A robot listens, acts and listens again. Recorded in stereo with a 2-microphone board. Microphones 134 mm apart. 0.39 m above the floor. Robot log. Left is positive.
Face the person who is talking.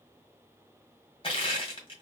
cmd idle
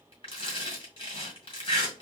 cmd idle
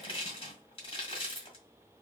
end: I can't make out anyone speaking to turn to.